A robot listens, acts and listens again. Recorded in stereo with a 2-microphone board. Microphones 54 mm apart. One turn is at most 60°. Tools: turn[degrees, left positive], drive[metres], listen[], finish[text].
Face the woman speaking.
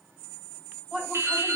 Action: turn[-30]
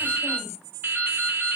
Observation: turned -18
Action: listen[]
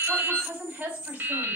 Thought: So it is at 160° right.
Action: turn[-60]
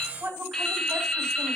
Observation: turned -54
Thought: The woman speaking is now 100° right.
Action: turn[-60]
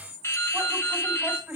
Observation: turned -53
Thought: The woman speaking is now 50° right.
Action: turn[-50]
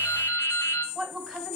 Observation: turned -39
Thought: The woman speaking is now 10° right.
Action: turn[-10]
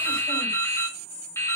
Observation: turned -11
Action: listen[]
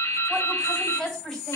Action: finish[Found it: a woman speaking, straight ahead.]